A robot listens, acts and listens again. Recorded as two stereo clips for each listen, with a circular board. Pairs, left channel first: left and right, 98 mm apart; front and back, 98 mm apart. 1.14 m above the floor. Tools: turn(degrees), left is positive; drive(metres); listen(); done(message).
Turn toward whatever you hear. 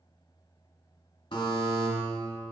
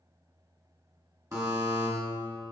turn(degrees=125)
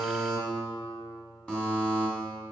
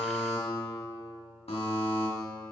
turn(degrees=10)
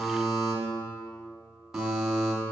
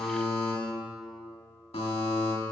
done("Facing the buzzer, 1 to 2 m away.")